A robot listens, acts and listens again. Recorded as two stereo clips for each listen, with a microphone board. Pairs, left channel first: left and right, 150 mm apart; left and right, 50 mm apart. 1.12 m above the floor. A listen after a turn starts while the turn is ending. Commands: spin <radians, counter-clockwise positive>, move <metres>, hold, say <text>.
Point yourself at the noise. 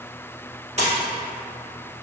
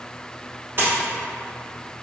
spin -0.79
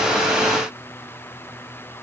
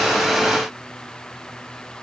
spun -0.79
hold
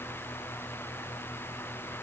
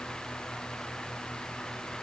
say I heard a splash, but can't make it out now. It was about straight ahead or 90° right.